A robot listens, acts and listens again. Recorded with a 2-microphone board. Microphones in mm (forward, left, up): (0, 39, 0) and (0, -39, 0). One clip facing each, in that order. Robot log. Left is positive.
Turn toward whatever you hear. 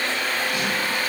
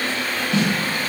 note: The snare drum: about 30° right or 150° right.
cmd yaw -30
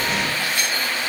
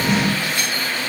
cmd idle
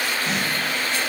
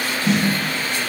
end: Facing the snare drum.